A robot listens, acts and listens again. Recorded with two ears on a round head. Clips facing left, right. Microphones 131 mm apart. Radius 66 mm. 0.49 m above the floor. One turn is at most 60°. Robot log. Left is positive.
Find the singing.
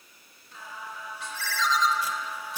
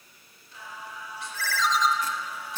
note: The singing: about 40° left or 140° left.
cmd yaw +40
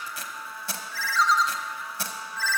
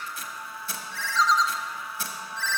end: Facing the singing.